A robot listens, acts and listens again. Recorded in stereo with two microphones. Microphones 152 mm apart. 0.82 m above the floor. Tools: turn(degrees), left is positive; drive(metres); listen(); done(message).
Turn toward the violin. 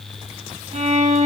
turn(degrees=-50)
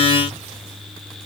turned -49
listen()
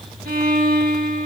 turn(degrees=-80)
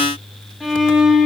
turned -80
done("Facing the violin.")